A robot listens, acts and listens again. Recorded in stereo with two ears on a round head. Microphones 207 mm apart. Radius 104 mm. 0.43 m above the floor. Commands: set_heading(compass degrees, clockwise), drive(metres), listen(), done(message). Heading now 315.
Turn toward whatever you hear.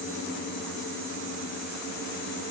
listen()
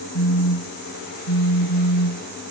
set_heading(255)
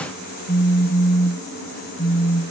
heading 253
set_heading(233)
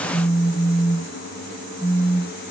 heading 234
done("Found it: a phone buzzing, straight ahead.")